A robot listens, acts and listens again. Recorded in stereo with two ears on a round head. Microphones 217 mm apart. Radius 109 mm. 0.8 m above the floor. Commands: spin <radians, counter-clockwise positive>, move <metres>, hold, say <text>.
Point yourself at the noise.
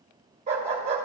spin -0.52
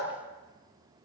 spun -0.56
hold
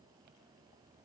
hold
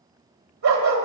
spin -2.09
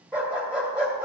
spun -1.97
say Found it: a dog barking, straight ahead.